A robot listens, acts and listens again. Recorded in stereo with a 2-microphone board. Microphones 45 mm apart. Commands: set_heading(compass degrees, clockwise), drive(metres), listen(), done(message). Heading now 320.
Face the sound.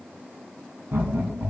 set_heading(20)
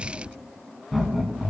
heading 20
done("Found it: laughter, straight ahead, over 4 m away.")